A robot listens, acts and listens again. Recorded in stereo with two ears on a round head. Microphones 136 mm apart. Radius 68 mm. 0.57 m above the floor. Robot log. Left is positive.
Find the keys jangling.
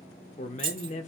note: The keys jangling: about 35° right or 145° right.
cmd yaw -35
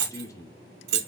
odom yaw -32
note: So it is at 105° right.
cmd yaw -105
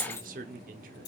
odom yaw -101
note: The keys jangling is now 15° left.
cmd yaw +15
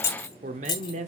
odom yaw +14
note: The keys jangling is now 30° left.
cmd yaw +30
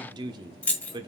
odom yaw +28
note: The keys jangling is now 10° left.
cmd yaw +10
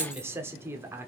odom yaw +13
cmd idle
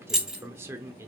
end: Found it: keys jangling, straight ahead.